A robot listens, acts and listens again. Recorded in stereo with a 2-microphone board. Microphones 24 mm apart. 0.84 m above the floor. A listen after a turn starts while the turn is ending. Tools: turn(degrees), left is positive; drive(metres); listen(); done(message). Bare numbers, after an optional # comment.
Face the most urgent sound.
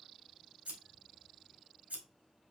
listen()
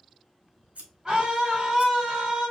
# The scream: about 25° right or 155° right.
turn(-25)
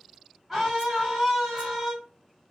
done("Found it: a scream, straight ahead.")